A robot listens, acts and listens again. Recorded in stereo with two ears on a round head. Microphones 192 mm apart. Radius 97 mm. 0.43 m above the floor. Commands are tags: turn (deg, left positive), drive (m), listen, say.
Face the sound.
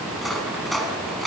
<turn deg="30"/>
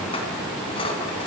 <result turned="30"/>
<turn deg="150"/>
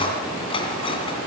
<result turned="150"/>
<turn deg="25"/>
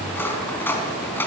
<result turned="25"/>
<turn deg="10"/>
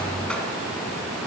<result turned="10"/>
<listen/>
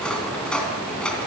<say>Facing the cutlery clinking.</say>